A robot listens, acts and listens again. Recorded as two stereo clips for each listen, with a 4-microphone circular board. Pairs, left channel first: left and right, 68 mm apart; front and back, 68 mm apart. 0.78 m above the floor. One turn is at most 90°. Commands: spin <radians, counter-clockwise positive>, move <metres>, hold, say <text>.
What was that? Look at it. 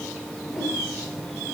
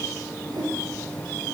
spin 1.57
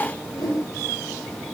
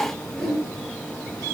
spin 1.57
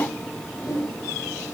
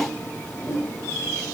spin 0.79
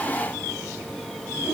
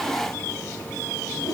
spin -0.17
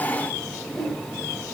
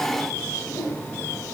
say Facing the whoosh, over 4 m away.